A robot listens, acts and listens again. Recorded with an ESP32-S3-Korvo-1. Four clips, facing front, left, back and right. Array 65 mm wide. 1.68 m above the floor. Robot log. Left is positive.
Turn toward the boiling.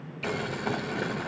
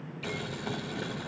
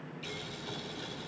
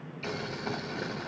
note: The boiling: 10° right.
cmd yaw -10
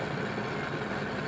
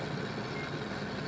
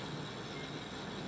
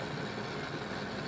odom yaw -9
end: Found it: boiling, straight ahead.